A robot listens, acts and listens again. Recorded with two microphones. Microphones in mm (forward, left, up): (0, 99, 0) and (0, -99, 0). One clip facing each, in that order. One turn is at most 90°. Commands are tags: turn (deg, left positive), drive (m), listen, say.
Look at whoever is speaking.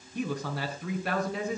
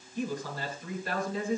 <turn deg="70"/>
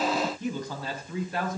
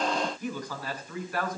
<turn deg="25"/>
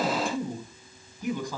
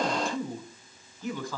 <turn deg="15"/>
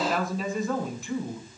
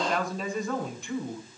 <say>Facing the man speaking.</say>